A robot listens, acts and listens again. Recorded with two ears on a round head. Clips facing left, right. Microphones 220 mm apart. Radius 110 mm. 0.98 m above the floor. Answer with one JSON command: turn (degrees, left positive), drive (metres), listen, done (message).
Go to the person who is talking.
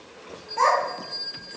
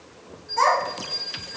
{"turn": -60}
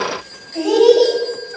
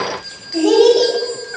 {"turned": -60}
{"turn": -60}
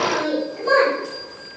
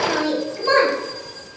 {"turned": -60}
{"turn": -25}
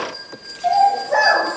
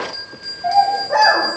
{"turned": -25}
{"drive": 1.0}
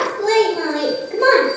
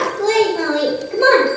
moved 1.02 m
{"drive": 1.0}
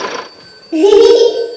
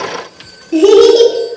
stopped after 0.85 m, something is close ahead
{"turn": -10}
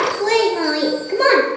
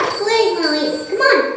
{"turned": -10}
{"done": "I am next to the child speaking."}